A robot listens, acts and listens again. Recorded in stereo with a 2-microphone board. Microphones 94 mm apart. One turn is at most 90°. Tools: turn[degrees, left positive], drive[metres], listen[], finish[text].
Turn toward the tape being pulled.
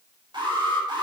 Action: listen[]
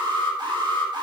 Action: listen[]
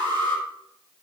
Action: finish[I can't make out tape being pulled, only an alarm.]